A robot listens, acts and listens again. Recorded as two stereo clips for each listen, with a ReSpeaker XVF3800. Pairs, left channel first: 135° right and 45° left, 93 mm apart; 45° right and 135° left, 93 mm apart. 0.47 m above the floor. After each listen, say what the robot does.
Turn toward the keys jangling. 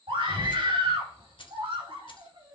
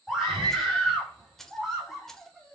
Turn 130° right.
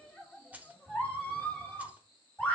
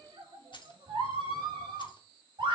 Turn 25° right.
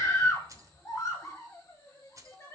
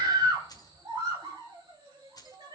Facing the keys jangling.